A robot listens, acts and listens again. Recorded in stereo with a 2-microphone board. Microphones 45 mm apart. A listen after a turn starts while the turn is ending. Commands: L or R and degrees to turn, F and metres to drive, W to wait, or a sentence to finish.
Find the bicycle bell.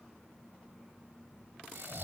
W
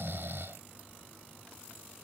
W
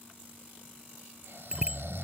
R30
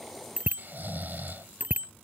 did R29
R135
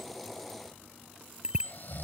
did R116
R20
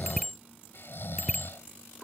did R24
Facing the bicycle bell.